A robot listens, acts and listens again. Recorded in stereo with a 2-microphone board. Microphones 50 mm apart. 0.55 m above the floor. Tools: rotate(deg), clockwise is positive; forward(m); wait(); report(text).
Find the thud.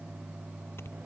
wait()
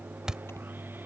rotate(30)
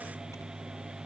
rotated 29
wait()
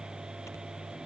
report("I heard a thud, but can't make it out now. It was about 15° left or 140° right.")